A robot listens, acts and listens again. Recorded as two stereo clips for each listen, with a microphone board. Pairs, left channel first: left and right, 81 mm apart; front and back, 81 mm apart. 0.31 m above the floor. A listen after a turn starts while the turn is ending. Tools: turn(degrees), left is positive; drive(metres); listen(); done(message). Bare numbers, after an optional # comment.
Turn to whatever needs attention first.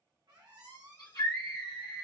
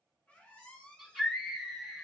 # The scream: 95° left.
turn(95)
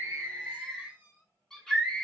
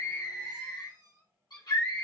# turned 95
# The scream is now 10° left.
turn(10)
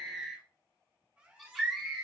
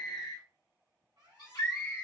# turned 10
done("Facing the scream, 1 to 2 m away.")